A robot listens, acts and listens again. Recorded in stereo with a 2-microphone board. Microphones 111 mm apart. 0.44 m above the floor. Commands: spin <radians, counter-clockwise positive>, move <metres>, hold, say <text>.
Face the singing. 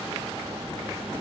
hold
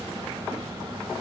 hold
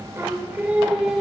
spin -0.52
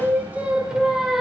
spin 0.52
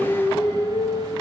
spin 2.44
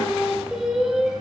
say Facing the singing.